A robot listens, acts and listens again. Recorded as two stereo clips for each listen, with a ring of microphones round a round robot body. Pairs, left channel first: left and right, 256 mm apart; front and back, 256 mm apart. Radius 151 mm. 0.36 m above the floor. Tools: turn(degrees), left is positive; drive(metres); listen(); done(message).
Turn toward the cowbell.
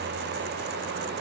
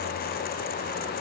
listen()
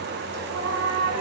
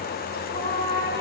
listen()
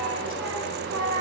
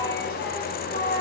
done("I can't make out a cowbell to turn to.")